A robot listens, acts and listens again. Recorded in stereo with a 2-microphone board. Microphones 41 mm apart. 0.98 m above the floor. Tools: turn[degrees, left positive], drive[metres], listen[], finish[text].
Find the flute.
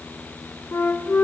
Thought: The flute: about 70° left or 110° left.
Action: turn[70]
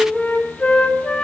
Thought: So it is at 30° left.
Action: turn[30]
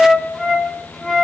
Thought: The flute is now 10° left.
Action: turn[10]
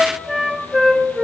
Action: finish[Facing the flute.]